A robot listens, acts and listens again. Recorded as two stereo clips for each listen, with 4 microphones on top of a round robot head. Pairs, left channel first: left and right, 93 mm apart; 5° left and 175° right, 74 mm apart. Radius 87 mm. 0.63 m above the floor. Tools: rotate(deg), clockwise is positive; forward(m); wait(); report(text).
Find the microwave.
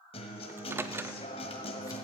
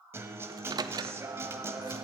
rotate(155)
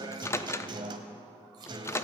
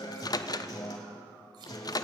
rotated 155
rotate(-30)
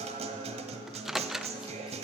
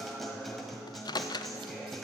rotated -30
report("Found it: a microwave, straight ahead.")